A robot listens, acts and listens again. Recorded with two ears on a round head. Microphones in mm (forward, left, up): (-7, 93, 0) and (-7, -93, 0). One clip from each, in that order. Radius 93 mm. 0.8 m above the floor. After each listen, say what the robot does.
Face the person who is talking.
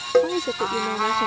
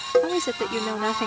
Turn 55° right.
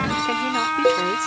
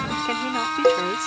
Keep listening.
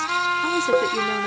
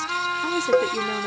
Keep listening.
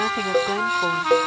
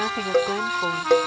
I heard a woman speaking, but can't make it out now. It was about straight ahead or 70° right.